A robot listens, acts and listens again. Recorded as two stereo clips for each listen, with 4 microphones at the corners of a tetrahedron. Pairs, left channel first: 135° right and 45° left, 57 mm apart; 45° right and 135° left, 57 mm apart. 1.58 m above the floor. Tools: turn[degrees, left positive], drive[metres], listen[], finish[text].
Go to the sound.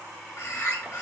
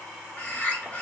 Thought: The bird: 105° right.
Action: turn[-105]
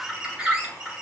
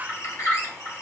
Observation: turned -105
Thought: The bird is now 30° right.
Action: turn[-30]
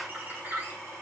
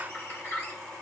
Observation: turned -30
Action: drive[1.0]
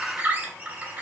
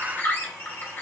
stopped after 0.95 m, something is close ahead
Action: finish[Arrived at the bird, straight ahead.]